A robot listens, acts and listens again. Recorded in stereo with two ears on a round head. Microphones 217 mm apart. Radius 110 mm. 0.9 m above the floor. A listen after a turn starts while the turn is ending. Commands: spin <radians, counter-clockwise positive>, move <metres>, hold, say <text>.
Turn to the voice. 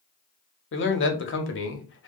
spin 0.87
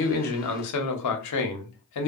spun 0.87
spin 1.40
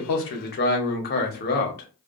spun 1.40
spin 0.70
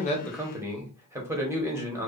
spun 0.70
spin -0.17
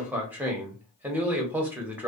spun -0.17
say Found it: a man speaking, straight ahead, under 1 m away.